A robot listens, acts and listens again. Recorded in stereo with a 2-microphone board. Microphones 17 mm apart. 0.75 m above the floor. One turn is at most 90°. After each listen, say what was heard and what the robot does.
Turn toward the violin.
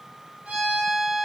Turn 90° right.
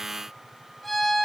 Found it: a violin, straight ahead, over 4 m away.